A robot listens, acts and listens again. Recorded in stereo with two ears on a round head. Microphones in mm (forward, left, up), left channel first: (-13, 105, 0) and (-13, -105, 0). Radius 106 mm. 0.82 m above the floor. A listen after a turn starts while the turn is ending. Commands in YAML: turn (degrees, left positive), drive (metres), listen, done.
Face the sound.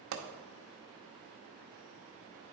turn: -60
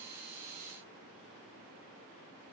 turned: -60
listen: true
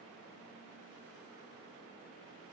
done: "I heard a pop, but can't make it out now. It was about straight ahead or 60° right."